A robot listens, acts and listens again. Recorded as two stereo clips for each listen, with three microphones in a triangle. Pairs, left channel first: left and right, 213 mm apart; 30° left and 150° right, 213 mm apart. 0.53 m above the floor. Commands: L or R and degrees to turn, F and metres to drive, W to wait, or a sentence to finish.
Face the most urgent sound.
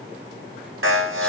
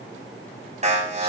R95
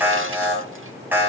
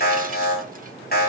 R10
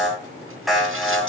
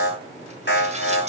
Facing the alarm.